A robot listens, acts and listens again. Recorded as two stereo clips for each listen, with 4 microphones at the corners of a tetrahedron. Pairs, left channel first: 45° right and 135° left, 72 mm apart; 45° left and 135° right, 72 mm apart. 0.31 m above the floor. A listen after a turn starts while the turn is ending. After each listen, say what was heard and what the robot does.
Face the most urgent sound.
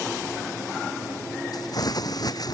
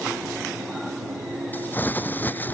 Keep listening.
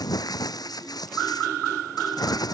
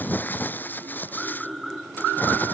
Keep listening.
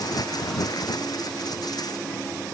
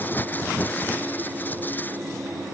I can't make out anything urgent to turn to.